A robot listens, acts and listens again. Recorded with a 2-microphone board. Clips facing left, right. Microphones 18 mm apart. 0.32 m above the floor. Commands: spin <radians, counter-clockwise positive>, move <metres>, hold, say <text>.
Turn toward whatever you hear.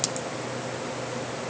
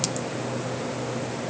hold
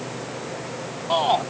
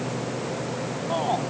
spin 0.70
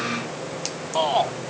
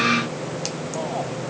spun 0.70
spin 1.66
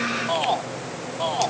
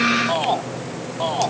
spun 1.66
say Facing the shout.